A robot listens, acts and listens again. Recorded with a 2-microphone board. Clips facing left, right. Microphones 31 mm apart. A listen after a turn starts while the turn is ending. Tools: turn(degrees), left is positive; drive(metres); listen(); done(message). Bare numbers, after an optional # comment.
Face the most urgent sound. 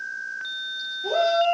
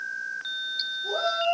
# The shout: about 70° left or 110° left.
turn(70)
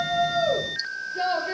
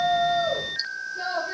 # So it is at 40° left.
turn(40)
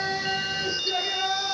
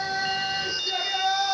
done("Found it: a shout, straight ahead.")